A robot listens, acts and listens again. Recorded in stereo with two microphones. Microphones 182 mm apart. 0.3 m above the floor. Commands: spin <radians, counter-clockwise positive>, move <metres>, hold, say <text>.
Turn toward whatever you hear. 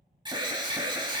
spin -0.44
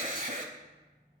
spin -2.09
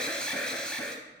say Found it: an alarm, straight ahead.